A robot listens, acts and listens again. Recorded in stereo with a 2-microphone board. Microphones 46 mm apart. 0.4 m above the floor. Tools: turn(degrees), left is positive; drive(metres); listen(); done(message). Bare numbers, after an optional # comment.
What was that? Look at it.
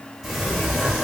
turn(-30)
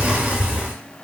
# So it is at 145° right.
turn(-145)
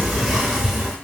# The sliding door is now 15° right.
turn(-15)
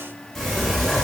done("Facing the sliding door.")